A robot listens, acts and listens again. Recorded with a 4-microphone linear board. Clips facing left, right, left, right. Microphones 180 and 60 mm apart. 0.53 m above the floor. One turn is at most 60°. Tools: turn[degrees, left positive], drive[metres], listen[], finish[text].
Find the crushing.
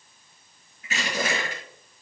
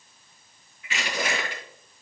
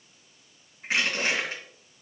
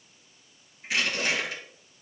Thought: The crushing: about 45° left or 135° left.
Action: turn[45]
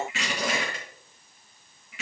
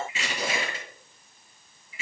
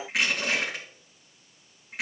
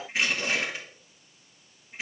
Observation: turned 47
Thought: So it is at 90° left.
Action: turn[60]
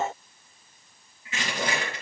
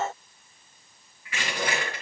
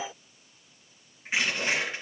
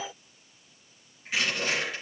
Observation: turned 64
Thought: The crushing is now 25° left.
Action: turn[25]
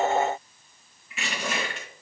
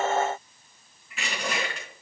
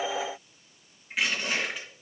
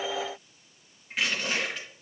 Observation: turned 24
Action: finish[Facing the crushing.]